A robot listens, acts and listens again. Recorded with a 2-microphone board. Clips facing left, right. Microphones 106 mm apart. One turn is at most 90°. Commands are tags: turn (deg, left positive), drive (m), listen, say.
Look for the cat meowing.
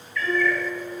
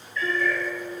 <turn deg="-25"/>
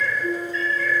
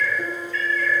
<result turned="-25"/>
<turn deg="30"/>
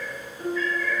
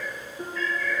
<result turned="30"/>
<turn deg="10"/>
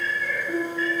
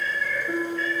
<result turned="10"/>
<turn deg="10"/>
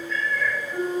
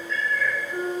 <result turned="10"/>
<say>Facing the cat meowing.</say>